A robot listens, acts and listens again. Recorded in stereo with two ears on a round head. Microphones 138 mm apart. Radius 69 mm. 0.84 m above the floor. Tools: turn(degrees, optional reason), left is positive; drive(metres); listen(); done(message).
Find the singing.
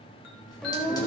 turn(degrees=30)
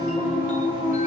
turn(degrees=-25, reason="So it is at 25° right.")
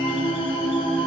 done("Found it: singing, straight ahead, 2 to 4 m away.")